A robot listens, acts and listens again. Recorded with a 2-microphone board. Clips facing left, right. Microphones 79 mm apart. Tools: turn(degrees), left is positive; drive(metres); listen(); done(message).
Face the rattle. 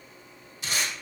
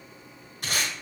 listen()
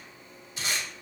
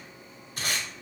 listen()
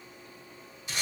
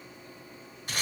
done("I can't make out a rattle to turn to.")